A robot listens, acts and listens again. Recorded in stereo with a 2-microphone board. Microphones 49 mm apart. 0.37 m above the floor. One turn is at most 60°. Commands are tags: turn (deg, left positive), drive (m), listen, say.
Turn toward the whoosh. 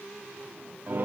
<listen/>
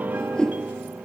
<turn deg="15"/>
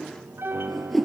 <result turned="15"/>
<say>Facing the whoosh.</say>